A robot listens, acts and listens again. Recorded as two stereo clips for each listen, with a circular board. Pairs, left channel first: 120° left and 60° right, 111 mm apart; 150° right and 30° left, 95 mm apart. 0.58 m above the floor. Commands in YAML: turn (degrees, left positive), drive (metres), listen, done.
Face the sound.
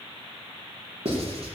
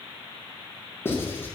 turn: -85
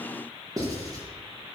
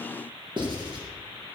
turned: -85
done: "Facing the writing, over 4 m away."